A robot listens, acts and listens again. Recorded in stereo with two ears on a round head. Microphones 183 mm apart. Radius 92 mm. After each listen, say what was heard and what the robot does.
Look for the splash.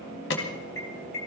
Keep listening.
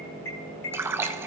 Turn 30° right.
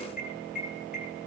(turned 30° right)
Keep listening.
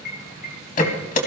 I heard a splash, but can't make it out now. It was about 15° left or 135° right.